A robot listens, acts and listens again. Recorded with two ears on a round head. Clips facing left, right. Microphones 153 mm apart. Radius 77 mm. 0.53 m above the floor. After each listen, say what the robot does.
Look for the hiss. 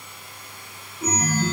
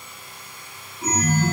Keep listening.
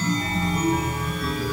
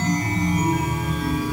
Keep listening.
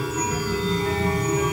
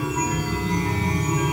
I can't make out a hiss to turn to.